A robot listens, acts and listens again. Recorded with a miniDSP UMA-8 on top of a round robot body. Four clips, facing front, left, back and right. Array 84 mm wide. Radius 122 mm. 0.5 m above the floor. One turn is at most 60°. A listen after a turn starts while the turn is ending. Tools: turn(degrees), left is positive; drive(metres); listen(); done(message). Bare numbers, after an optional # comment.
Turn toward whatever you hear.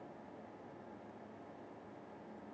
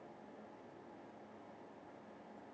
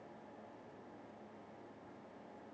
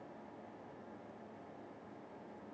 listen()
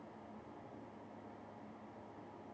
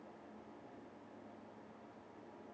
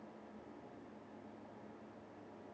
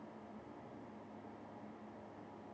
listen()
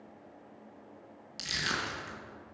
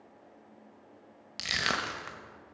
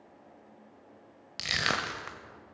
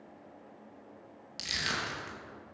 # The crushing: 150° left.
turn(60)
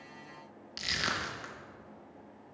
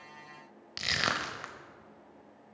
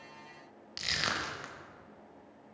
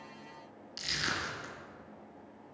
# The crushing is now 95° left.
turn(60)
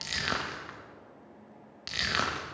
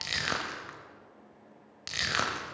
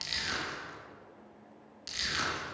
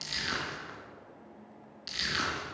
# The crushing is now 45° left.
turn(45)
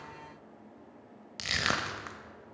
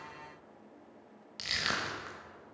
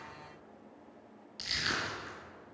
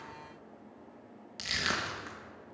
done("Facing the crushing.")